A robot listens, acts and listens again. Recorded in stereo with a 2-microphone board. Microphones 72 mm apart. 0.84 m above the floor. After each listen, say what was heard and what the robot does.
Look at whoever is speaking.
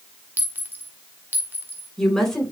Turn 30° left.
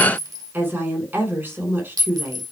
So it is at 30° right. Turn 30° right.
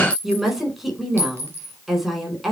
Facing the woman speaking.